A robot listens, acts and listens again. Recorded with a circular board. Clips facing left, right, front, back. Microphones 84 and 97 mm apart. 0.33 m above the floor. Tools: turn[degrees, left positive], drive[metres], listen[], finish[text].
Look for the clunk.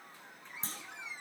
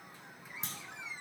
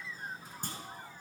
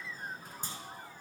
Thought: The clunk: 35° left.
Action: turn[35]
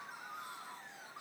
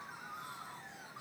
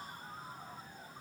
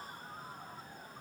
Action: finish[Facing where the clunk came from. I can't hear it now.]